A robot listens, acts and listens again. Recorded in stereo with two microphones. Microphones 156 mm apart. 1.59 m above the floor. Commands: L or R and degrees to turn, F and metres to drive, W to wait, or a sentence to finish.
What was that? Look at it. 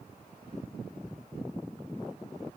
W
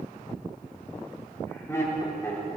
L15
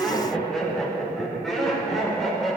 L30
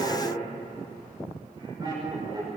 R30
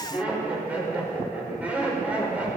R10
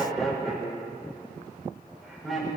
Found it: laughter, straight ahead.